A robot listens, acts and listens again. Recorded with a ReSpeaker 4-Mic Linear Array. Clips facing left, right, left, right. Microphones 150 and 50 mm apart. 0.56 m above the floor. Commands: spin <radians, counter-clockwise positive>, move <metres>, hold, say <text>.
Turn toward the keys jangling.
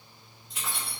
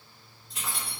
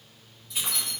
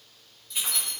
spin 0.52
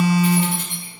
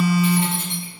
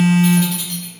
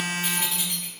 spin -0.44
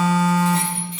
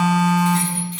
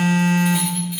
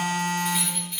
say Facing the keys jangling.